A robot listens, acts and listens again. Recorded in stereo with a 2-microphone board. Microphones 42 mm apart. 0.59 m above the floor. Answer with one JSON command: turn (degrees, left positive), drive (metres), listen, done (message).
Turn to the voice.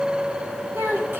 {"turn": -65}
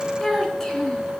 {"turn": 10}
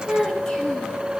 {"done": "Facing the child speaking, over 4 m away."}